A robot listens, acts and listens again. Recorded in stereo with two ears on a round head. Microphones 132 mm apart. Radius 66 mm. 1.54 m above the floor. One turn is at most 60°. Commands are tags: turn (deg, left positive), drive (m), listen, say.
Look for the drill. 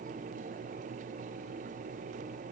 <listen/>
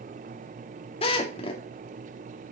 <turn deg="40"/>
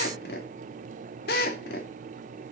<turn deg="60"/>
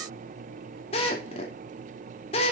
<turn deg="40"/>
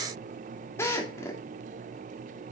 <turn deg="20"/>
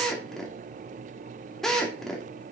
<say>Facing the drill, 2 to 4 m away.</say>